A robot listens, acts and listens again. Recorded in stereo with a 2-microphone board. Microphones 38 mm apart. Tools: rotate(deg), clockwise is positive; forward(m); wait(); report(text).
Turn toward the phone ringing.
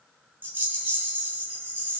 wait()
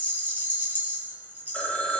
rotate(-30)
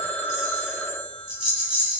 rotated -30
rotate(-115)
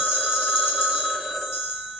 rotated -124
rotate(10)
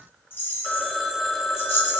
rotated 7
report("Found it: a phone ringing, straight ahead.")